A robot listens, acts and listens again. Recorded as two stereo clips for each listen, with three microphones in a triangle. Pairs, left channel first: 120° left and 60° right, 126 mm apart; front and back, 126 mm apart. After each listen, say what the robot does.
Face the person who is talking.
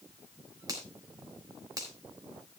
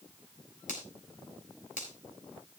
Keep listening.
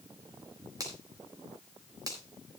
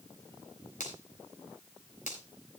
Keep listening.
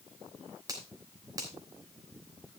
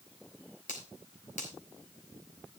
I can't make out anyone speaking to turn to.